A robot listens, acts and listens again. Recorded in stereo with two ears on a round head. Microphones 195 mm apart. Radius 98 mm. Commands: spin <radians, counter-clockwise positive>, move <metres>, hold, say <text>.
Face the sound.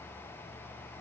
hold
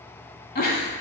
spin 0.79
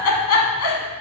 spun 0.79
spin 1.48
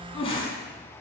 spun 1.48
spin 0.44
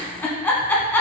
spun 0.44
spin 0.17
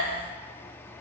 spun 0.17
hold
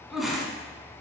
say Found it: a giggle, straight ahead.